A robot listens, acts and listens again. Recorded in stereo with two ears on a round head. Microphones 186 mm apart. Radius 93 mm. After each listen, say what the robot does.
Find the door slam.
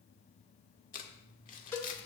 Keep listening.
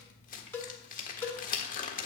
Keep listening.
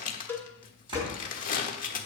Turn 25° right.
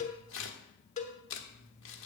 Keep listening.
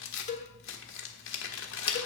I heard a door slam, but can't make it out now. It was about straight ahead or 130° right.